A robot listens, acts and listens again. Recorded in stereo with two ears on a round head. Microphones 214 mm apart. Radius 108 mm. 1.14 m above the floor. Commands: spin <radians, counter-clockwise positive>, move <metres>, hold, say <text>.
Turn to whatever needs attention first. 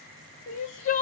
spin 0.61
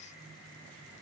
hold
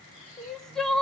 say Found it: crying, straight ahead, under 1 m away.